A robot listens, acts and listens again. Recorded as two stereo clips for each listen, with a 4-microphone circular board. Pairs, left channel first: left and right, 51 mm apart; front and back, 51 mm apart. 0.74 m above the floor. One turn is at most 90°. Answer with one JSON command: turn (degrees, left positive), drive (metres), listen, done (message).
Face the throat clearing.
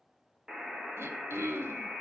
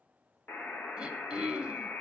{"turn": -90}
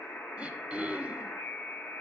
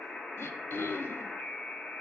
{"turn": -20}
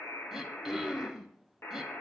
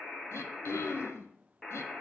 {"done": "Facing the throat clearing."}